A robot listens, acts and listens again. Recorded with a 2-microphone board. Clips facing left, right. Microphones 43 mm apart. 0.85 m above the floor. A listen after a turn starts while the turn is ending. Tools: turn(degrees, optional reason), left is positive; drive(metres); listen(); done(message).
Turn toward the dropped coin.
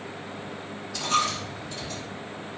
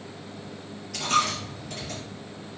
turn(degrees=-90)
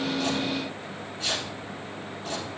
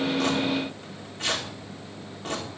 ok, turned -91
done("Facing where the dropped coin came from. I can't hear it now.")